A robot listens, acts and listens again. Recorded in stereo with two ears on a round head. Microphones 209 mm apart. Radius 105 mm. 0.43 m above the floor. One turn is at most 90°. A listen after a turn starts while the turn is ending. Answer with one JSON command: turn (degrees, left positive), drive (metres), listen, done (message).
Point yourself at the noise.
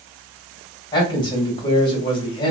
{"turn": 20}
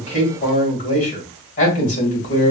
{"turn": 90}
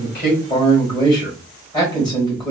{"turn": 20}
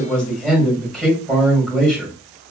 {"done": "Found it: a man speaking, straight ahead, 1 to 2 m away."}